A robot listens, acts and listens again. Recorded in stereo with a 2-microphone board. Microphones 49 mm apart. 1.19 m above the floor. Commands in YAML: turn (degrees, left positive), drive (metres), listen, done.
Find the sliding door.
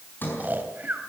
turn: 45
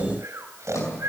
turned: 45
turn: 90
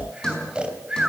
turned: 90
turn: 15
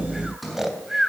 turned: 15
done: "Facing the sliding door, over 4 m away."